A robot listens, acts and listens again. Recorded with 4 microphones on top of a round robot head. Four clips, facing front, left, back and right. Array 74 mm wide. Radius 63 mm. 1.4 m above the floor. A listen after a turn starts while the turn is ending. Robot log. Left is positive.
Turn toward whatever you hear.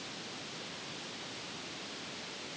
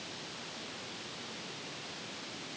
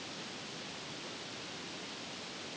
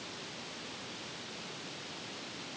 cmd idle
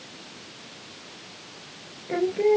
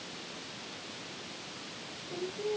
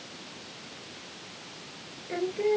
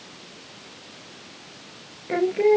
note: The singing: 70° right.
cmd yaw -70
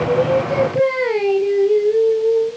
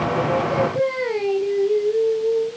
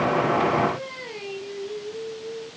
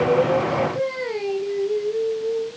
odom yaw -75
note: The singing is now 10° left.
cmd yaw +10
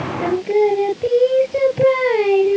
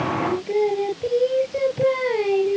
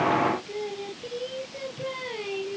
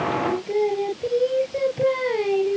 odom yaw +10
end: Found it: singing, straight ahead.